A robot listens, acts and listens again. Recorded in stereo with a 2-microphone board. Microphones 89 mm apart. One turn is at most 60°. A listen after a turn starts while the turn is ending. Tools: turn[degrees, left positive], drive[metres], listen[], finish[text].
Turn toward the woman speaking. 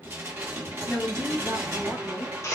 Action: turn[30]
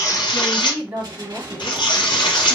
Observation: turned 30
Thought: So it is at 25° right.
Action: turn[-25]
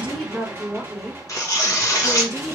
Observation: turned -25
Action: finish[Facing the woman speaking.]